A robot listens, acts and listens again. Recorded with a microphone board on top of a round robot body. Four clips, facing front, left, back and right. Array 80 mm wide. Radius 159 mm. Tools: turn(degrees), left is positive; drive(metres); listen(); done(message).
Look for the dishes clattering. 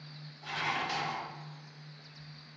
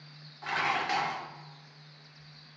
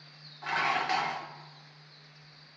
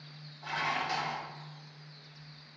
turn(degrees=130)
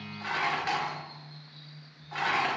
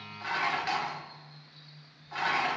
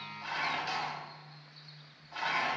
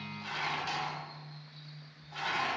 turn(degrees=35)
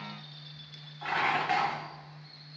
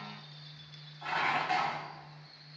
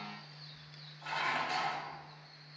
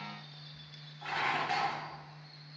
done("Facing the dishes clattering, 1 to 2 m away.")